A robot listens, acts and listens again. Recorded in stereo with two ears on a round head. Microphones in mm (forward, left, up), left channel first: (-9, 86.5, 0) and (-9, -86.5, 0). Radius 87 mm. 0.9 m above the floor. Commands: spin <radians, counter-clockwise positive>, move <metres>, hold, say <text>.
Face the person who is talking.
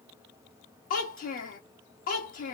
spin 0.79
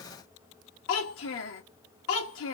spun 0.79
spin 1.48
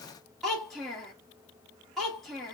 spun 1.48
say Found it: a child speaking, straight ahead.